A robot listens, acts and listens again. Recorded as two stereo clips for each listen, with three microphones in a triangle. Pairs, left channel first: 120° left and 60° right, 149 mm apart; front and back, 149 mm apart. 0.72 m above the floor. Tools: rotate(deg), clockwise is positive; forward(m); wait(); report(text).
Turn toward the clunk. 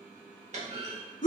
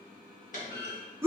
rotate(25)
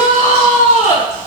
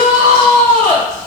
report("I heard a clunk from this way, but can't make it out now.")